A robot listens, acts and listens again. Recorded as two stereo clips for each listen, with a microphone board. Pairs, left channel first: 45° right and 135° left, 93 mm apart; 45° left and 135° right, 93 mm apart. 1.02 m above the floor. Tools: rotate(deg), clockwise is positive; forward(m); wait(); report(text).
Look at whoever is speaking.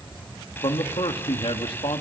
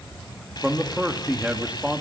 rotate(60)
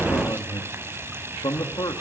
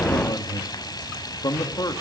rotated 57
report("Facing the man speaking, 2 to 4 m away.")